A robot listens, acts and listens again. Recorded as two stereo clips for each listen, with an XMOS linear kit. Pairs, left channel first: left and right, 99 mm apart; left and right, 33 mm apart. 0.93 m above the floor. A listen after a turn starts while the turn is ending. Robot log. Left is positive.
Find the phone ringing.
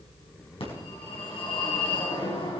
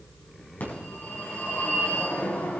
note: The phone ringing: about 70° left or 110° left.
cmd yaw +70
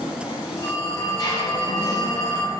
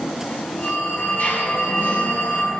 note: So it is at 40° left.
cmd yaw +40
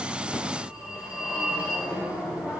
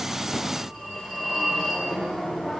note: The phone ringing is now 10° right.
cmd yaw -10
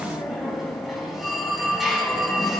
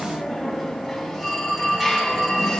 end: Found it: a phone ringing, straight ahead, over 4 m away.